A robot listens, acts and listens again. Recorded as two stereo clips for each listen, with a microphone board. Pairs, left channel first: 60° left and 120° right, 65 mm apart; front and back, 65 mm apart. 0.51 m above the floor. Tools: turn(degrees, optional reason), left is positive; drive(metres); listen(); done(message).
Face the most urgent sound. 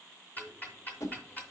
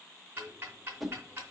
listen()
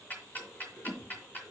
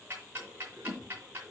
listen()
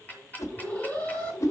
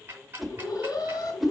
done("Facing the alarm, 1 to 2 m away.")